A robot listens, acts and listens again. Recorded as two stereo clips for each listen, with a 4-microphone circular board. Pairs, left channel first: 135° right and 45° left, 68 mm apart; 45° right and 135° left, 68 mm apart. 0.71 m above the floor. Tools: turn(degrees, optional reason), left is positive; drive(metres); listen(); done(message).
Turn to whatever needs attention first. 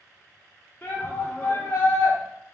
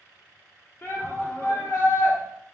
turn(degrees=-85, reason="The shout: 85° right.")
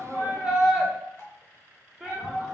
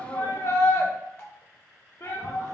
turn(degrees=-35, reason="The shout is now 35° right.")
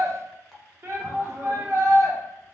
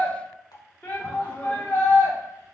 turn(degrees=10, reason="The shout is now 10° left.")
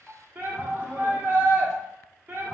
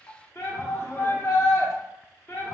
done("Found it: a shout, straight ahead, 1 to 2 m away.")